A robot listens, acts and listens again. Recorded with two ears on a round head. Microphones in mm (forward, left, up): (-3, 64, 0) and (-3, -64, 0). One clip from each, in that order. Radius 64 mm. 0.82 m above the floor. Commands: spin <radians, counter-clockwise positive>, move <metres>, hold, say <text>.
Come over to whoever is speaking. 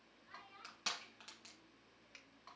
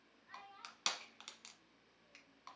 spin -0.52
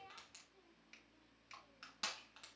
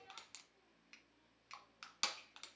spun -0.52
spin 0.44
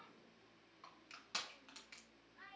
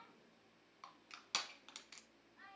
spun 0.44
move 1.0
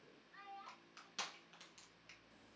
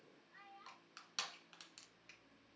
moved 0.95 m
spin 0.17
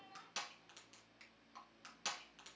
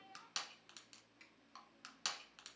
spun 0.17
move 1.0
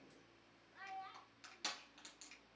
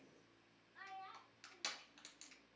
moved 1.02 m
move 1.0
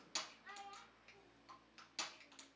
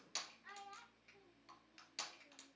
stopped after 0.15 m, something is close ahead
spin -0.17
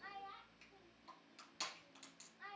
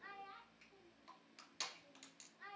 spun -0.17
say I am next to the child speaking.